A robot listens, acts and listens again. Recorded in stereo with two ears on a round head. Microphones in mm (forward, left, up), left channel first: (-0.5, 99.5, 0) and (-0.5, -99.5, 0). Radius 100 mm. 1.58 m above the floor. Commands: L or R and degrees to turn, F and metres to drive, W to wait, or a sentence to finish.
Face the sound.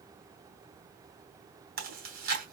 R45
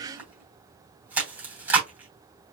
R10
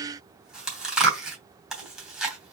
Facing the chewing.